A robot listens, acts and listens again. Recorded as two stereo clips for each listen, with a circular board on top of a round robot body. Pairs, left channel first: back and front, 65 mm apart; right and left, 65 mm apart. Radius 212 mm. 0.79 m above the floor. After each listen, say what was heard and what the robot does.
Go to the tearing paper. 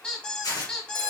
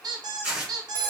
The tearing paper: 170° left. Turn 170° left.
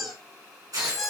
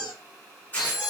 The tearing paper is now 20° right. Turn 20° right.
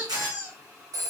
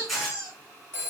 Drive 1.0 m forward.
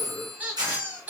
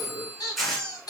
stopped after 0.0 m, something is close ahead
Something is in my way. I am facing the tearing paper but have not reached it.